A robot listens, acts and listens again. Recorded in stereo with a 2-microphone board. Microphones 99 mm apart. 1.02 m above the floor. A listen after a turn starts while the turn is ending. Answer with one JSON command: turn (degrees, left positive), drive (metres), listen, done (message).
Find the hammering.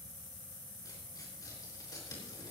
{"listen": true}
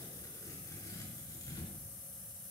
{"listen": true}
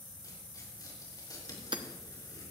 {"turn": -55}
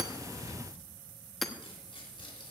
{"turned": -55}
{"done": "Found it: hammering, straight ahead."}